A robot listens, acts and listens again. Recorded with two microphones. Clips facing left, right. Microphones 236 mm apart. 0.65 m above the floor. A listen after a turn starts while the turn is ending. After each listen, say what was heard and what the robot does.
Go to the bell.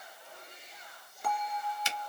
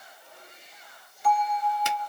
The bell: about 55° left or 125° left. Turn 55° left.
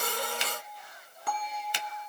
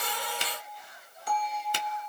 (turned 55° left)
So it is at 65° left. Turn 65° left.
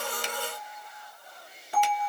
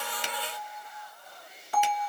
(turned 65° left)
The bell is now 25° left. Turn 25° left.
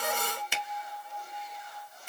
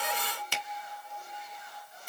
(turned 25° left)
Drive 1.0 m forward.
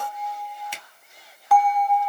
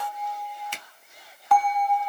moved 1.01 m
Drive 1.0 m forward.
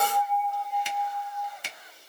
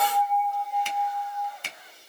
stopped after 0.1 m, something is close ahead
I am next to the bell.